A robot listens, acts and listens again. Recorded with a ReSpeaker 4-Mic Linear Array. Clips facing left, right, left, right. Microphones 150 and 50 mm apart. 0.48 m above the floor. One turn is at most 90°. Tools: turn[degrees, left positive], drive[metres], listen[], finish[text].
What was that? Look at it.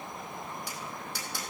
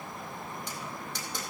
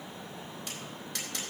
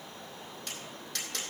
Action: turn[30]
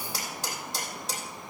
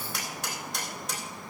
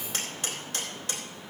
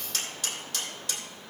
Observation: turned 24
Thought: So it is at 150° left.
Action: turn[90]
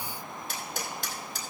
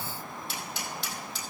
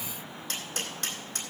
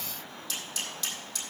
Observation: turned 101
Thought: The tapping is now 45° left.
Action: turn[45]
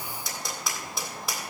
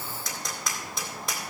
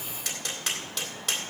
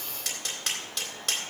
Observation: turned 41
Action: finish[Found it: tapping, straight ahead, 2 to 4 m away.]